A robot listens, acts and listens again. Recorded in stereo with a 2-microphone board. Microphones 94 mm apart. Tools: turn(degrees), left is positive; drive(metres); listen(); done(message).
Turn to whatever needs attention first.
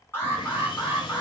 turn(degrees=25)
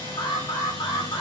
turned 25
turn(degrees=125)
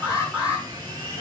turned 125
turn(degrees=-15)
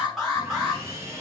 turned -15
done("Facing the alarm.")